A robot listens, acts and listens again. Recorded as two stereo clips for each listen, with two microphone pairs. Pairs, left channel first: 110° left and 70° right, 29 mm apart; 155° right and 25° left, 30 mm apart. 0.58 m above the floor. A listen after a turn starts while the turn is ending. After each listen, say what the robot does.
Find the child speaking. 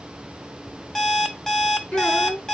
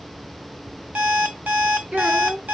Turn 70° left.
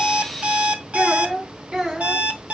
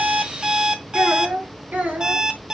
Found it: a child speaking, straight ahead, 2 to 4 m away.